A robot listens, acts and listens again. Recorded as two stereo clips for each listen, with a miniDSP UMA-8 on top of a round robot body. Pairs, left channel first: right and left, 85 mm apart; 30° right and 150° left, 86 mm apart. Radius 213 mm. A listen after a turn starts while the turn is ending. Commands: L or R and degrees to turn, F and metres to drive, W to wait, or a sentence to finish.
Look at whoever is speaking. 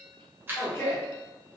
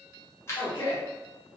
R30
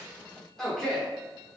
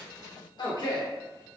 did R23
Facing the man speaking, 1 to 2 m away.